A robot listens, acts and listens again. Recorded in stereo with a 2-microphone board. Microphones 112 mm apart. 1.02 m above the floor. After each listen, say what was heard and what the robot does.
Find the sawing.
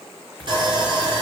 The sawing: about 45° right or 135° right. Turn 45° right.
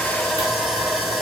Facing the sawing.